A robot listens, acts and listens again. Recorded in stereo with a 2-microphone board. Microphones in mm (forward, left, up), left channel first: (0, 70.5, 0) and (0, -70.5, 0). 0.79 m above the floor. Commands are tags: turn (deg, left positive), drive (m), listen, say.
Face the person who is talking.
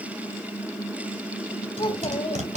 <turn deg="35"/>
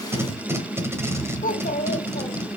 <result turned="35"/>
<turn deg="110"/>
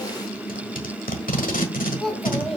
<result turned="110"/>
<say>Facing the child speaking.</say>